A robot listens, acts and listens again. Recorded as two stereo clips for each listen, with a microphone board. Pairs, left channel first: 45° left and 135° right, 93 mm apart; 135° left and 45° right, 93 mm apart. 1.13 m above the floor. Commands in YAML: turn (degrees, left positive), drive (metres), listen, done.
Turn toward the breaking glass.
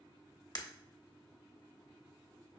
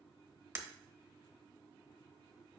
turn: 15
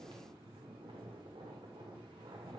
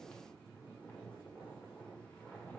done: "Facing where the breaking glass came from. I can't hear it now."